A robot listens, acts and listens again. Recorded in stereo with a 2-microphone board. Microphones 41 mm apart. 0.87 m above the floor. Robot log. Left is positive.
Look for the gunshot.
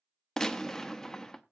cmd yaw +30
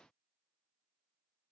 cmd idle
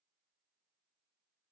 end: I heard a gunshot, but can't make it out now. It was about 20° right or 140° left.